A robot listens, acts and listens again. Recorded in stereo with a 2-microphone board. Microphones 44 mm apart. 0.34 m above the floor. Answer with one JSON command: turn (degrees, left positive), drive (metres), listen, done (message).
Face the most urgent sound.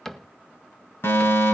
{"turn": 60}
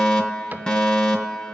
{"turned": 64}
{"turn": 20}
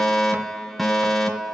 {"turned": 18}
{"done": "Facing the fire alarm."}